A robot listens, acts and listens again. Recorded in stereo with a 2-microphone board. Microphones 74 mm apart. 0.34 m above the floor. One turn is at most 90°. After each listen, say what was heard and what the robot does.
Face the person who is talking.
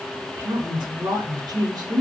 The woman speaking: about 75° right or 105° right. Turn 75° right.
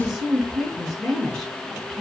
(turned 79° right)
Facing the woman speaking.